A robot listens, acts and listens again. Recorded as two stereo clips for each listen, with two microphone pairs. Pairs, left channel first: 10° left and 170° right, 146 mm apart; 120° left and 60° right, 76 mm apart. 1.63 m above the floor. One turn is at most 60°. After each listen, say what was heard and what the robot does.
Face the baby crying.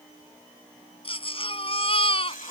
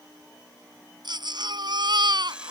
The baby crying: 40° right. Turn 40° right.
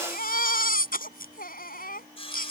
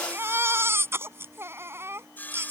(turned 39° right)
Facing the baby crying.